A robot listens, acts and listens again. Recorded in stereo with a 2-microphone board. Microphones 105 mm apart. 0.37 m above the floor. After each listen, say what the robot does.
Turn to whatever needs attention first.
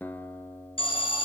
Turn 55° left.
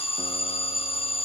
Turn 65° left.
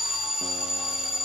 Found it: an alarm, straight ahead.